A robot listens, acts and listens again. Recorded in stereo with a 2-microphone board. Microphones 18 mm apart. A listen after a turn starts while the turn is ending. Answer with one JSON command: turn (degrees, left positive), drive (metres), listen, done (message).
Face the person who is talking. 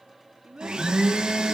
{"turn": -60}
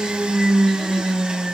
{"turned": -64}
{"listen": true}
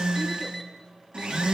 {"listen": true}
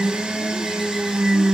{"done": "I heard a child speaking, but can't make it out now. It was about 5° left or 55° right."}